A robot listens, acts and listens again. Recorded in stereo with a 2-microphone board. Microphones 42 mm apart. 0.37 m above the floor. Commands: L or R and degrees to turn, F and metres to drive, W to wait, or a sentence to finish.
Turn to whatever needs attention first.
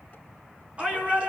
R25
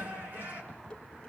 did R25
R130
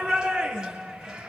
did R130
R20
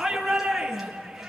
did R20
Facing the shout, over 4 m away.